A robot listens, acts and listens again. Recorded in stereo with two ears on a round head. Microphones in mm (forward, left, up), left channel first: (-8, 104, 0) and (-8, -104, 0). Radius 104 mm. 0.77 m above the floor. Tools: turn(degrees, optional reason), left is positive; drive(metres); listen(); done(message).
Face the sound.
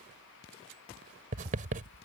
turn(degrees=-35, reason="The writing: about 35° right or 145° right.")
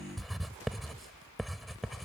done("Facing the writing.")